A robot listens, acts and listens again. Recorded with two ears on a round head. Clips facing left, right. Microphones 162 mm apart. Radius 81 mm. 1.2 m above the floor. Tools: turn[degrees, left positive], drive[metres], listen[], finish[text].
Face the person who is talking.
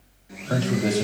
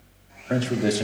Thought: The man speaking: about 15° right or 165° right.
Action: turn[-15]
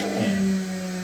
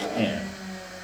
Thought: The man speaking: about 30° right or 150° right.
Action: turn[-30]
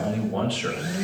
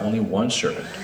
Thought: So it is at 125° right.
Action: turn[-125]
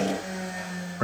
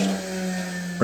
Thought: The man speaking is now 45° right.
Action: turn[-45]
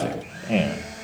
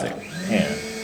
Thought: The man speaking is now 10° right.
Action: turn[-10]
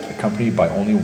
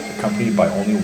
Action: finish[Facing the man speaking, 1 to 2 m away.]